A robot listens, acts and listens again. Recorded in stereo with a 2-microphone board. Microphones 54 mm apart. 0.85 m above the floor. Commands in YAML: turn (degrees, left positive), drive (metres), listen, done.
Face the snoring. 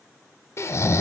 turn: 60
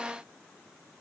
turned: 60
listen: true
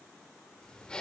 listen: true
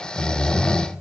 turn: 20
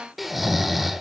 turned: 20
done: "Facing the snoring, under 1 m away."